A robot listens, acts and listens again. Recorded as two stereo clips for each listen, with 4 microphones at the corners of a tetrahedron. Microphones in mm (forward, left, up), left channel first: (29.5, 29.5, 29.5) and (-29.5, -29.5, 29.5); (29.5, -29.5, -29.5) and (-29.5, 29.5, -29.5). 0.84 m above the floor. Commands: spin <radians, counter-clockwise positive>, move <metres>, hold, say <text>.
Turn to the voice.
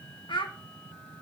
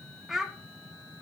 spin 0.87
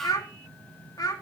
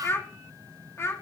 spin 0.17
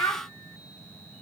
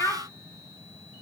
say Facing the child speaking, 1 to 2 m away.